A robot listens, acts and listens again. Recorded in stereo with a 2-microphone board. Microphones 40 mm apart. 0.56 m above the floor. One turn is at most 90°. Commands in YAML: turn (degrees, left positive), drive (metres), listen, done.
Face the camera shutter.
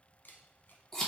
turn: 55
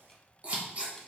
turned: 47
listen: true
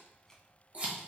listen: true
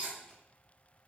done: "I heard a camera shutter, but can't make it out now. It was about 10° left or 80° left."